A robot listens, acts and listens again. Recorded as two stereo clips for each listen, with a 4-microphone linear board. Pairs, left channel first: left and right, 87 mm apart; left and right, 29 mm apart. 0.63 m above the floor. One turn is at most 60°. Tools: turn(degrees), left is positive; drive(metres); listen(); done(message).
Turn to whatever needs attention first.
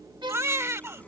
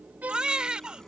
turn(degrees=-30)
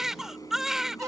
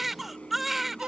done("Found it: a baby crying, straight ahead.")